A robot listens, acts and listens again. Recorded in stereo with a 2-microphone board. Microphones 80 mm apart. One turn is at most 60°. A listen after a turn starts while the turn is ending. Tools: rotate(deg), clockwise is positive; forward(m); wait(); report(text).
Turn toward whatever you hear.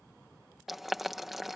rotate(30)
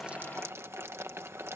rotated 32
rotate(60)
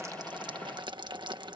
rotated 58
rotate(60)
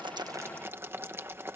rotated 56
rotate(30)
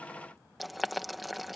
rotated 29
report("Found it: boiling, straight ahead.")